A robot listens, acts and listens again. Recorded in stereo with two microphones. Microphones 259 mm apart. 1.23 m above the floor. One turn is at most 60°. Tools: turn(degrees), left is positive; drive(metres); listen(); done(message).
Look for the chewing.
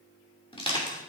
listen()
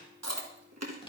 turn(degrees=-60)
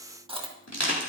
turn(degrees=-20)
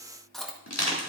done("Found it: chewing, straight ahead, 1 to 2 m away.")